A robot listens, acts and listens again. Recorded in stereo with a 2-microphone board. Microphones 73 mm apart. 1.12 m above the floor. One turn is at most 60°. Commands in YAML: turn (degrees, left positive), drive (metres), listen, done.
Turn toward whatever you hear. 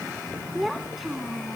turn: 30
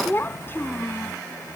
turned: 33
turn: 60
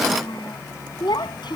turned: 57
turn: 60
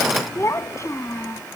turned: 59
turn: 40
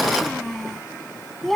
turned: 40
done: "Facing the child speaking."